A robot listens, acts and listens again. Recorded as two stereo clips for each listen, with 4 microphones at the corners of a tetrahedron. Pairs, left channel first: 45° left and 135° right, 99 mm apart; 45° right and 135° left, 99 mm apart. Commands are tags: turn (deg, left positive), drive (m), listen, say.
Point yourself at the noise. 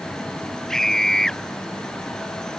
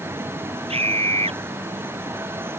<turn deg="130"/>
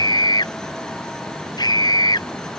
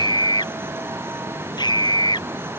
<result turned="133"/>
<say>Facing the scream.</say>